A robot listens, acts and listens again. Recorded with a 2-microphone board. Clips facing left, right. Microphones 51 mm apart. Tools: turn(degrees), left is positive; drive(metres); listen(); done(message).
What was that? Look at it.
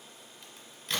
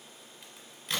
turn(degrees=-30)
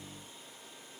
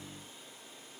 listen()
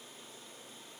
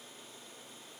done("I heard a crack, but can't make it out now. It was about 25° left or 145° right.")